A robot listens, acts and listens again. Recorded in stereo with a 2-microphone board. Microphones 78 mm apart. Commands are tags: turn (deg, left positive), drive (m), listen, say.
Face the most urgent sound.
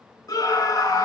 <turn deg="50"/>
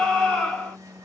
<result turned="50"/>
<turn deg="10"/>
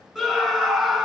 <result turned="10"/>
<say>Found it: a scream, straight ahead.</say>